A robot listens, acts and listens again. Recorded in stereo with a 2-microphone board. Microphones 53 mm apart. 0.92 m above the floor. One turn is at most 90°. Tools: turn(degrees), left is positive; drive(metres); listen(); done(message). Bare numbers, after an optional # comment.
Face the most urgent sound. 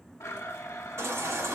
# The baby crying: about 70° right or 110° right.
turn(-70)
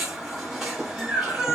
done("Found it: a baby crying, straight ahead.")